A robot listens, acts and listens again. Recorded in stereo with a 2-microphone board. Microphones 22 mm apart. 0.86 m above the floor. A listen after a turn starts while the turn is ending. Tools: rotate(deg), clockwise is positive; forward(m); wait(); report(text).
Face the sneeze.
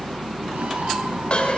wait()
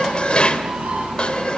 wait()
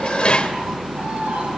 report("I can't make out a sneeze, only dishes clattering.")